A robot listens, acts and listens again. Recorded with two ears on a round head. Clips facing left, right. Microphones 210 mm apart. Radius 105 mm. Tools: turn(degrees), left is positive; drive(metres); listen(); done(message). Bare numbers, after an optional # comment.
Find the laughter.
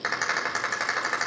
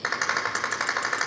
listen()
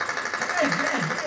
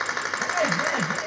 # The laughter: about 50° left or 130° left.
turn(50)
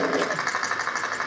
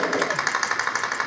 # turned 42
listen()
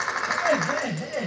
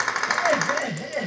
done("Facing the laughter.")